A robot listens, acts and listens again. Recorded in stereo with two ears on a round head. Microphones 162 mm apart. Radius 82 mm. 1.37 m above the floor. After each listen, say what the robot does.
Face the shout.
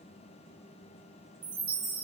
Keep listening.
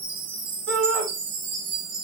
Turn 75° right.
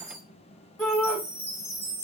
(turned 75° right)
Facing the shout, 1 to 2 m away.